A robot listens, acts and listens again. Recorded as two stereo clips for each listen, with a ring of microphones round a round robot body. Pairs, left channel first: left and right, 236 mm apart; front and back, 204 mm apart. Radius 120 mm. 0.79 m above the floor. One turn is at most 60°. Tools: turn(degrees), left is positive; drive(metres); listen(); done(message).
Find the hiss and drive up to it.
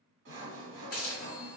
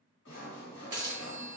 turn(degrees=60)
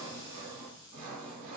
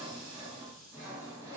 turn(degrees=50)
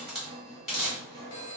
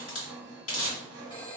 drive(metres=1.0)
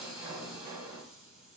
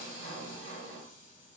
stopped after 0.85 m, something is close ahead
listen()
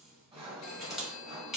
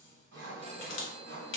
done("Arrived at the hiss, straight ahead.")